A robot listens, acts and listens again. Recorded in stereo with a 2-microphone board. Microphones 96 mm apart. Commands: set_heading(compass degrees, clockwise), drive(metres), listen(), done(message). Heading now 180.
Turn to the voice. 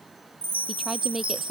set_heading(210)
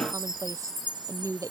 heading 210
set_heading(355)
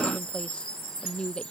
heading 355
set_heading(345)
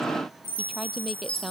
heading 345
done("Facing the woman speaking.")